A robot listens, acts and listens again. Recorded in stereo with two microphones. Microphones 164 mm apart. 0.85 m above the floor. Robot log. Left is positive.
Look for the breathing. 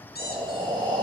note: The breathing: about 30° right or 150° right.
cmd yaw -30
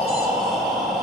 end: Found it: breathing, straight ahead.